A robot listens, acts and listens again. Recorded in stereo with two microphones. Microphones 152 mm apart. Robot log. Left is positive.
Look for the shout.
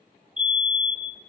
cmd idle
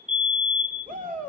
note: The shout: about 60° right or 120° right.
cmd yaw -60
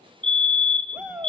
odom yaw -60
note: So it is at 10° right.
cmd yaw -10
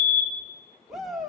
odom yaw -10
end: Found it: a shout, straight ahead, 2 to 4 m away.